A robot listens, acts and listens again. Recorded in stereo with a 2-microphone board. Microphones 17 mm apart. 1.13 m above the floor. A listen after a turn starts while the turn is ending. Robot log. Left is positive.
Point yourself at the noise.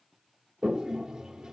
note: The toilet flushing: about 40° right or 140° right.
cmd yaw -40
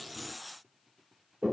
end: Found it: a toilet flushing, straight ahead, 1 to 2 m away.